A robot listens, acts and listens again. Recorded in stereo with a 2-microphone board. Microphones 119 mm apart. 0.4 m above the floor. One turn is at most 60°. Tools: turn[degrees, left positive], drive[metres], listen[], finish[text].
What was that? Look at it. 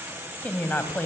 Thought: The woman speaking: about 15° left or 165° left.
Action: turn[15]
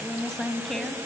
Action: turn[30]
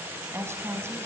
Thought: So it is at 20° right.
Action: turn[-20]
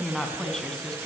Action: finish[Found it: a woman speaking, straight ahead.]